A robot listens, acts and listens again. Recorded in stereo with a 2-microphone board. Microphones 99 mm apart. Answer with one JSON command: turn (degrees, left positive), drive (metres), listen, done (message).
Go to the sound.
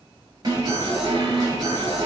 {"turn": -40}
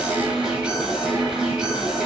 {"turn": -10}
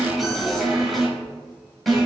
{"drive": 1.0}
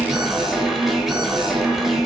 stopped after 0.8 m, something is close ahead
{"done": "Arrived at the alarm, straight ahead."}